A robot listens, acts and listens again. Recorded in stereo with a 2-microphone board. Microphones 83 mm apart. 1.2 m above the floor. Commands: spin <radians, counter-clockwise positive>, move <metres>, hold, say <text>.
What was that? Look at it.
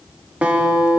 spin -0.26
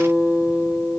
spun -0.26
spin -2.62
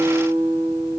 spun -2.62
spin -0.87
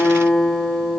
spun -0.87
spin 0.17
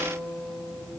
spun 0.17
say Facing the guitar.